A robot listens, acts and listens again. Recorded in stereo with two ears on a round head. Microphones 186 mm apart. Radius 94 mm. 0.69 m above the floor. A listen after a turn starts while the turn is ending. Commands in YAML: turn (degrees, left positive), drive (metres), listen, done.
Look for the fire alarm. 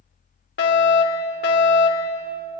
turn: 55
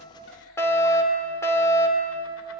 turn: 15
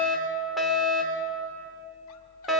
done: "Facing the fire alarm."